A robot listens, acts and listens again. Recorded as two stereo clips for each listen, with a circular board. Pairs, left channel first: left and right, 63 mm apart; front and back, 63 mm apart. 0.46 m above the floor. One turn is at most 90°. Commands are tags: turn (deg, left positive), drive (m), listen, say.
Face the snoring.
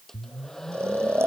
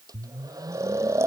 <turn deg="-90"/>
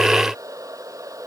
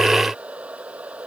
<turn deg="-45"/>
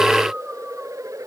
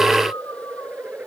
<listen/>
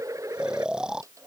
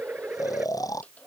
<turn deg="-15"/>
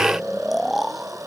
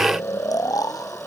<say>Found it: snoring, straight ahead.</say>